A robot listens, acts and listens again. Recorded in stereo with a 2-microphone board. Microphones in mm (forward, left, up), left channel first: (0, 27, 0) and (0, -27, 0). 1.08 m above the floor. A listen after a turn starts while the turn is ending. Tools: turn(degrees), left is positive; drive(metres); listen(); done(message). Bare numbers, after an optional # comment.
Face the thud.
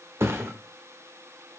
# The thud: about 55° right or 125° right.
turn(-55)
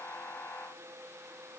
listen()
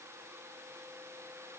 done("I heard a thud, but can't make it out now. It was about straight ahead or 70° right.")